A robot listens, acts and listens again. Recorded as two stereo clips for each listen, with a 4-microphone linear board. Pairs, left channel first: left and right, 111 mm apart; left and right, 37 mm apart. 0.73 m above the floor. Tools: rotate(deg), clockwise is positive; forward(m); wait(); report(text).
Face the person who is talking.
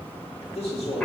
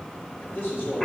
rotate(-90)
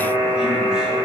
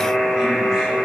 wait()
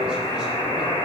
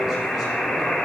wait()
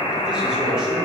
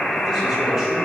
report("I heard a man speaking from this way, but can't make it out now.")